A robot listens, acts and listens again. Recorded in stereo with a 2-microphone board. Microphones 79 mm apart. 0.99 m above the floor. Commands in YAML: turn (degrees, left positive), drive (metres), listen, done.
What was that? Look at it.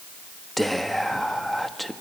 turn: 30
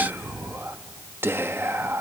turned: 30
turn: -30
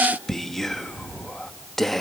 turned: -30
done: "Found it: whispering, straight ahead."